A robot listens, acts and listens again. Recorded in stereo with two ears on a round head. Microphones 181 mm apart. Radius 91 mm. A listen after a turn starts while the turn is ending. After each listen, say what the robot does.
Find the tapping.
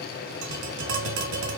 Turn 75° right.
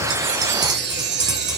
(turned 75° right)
Turn 20° right.
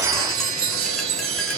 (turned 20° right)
Keep listening.
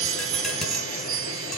Keep listening.
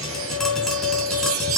Facing the tapping.